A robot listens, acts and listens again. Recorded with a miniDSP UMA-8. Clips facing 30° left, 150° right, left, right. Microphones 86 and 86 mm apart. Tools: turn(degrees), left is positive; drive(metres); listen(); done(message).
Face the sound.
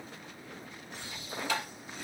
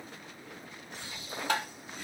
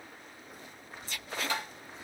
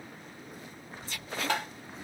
turn(degrees=-110)
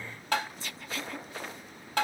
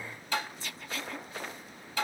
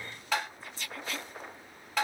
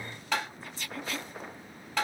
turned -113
done("Facing the tapping, under 1 m away.")